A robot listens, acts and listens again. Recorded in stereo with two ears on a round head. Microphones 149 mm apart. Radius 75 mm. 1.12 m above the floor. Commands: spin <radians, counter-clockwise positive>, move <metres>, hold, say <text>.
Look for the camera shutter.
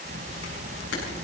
spin 1.57
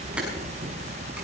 hold
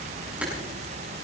say Found it: a camera shutter, straight ahead.